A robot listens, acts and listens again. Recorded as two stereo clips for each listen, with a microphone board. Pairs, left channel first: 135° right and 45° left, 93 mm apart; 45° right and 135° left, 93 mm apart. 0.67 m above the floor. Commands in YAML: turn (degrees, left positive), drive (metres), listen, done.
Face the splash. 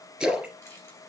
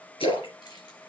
turn: -40
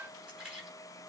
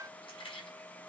done: "Facing where the splash came from. I can't hear it now."